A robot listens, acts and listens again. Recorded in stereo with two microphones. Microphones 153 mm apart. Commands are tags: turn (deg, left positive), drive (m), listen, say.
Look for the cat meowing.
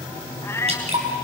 <turn deg="20"/>
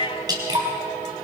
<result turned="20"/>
<turn deg="140"/>
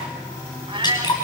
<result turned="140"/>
<turn deg="-35"/>
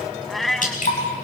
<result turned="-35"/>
<say>Facing the cat meowing.</say>